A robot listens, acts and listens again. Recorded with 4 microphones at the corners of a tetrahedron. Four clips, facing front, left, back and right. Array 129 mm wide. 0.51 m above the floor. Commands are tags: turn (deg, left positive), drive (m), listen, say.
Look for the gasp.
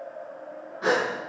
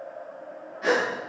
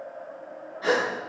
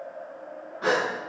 <turn deg="-60"/>
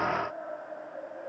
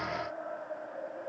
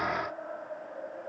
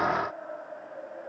<say>Facing where the gasp came from. I can't hear it now.</say>